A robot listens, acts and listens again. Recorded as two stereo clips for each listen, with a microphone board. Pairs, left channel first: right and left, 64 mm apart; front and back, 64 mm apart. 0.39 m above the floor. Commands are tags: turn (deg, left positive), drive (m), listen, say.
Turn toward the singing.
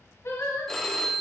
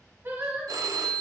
<turn deg="-120"/>
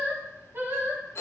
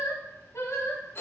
<turn deg="45"/>
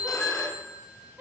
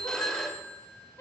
<turn deg="35"/>
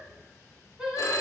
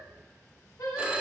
<turn deg="15"/>
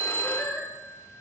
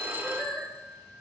<say>Facing the singing.</say>